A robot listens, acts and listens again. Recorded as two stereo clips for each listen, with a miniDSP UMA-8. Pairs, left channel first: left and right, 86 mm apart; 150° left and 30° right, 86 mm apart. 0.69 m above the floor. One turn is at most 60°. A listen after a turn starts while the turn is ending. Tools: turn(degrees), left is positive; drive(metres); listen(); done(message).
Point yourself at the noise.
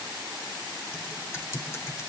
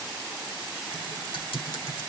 turn(degrees=60)
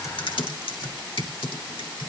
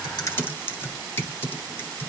turn(degrees=60)
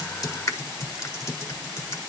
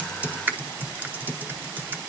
turn(degrees=40)
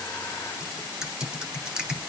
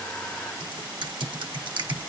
turn(degrees=-10)
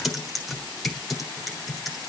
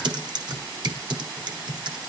done("Facing the typing on a keyboard, 1 to 2 m away.")